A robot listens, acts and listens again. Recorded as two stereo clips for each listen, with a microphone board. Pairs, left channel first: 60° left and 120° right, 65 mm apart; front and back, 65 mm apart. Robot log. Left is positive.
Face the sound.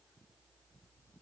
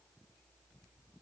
cmd idle
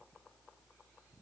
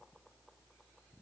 cmd idle
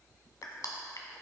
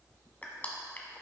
note: The crushing: 60° left.
cmd yaw +60
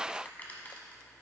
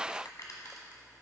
end: Found it: crushing, straight ahead, 1 to 2 m away.